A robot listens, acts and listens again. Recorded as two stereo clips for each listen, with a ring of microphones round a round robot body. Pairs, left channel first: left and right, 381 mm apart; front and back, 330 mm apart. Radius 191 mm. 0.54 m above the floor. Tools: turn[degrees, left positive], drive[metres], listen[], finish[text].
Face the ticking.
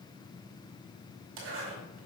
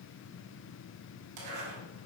Action: listen[]
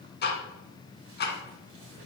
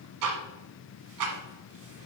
Thought: The ticking: 155° left.
Action: turn[155]
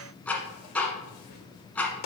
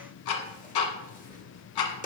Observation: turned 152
Action: finish[Found it: ticking, straight ahead, 1 to 2 m away.]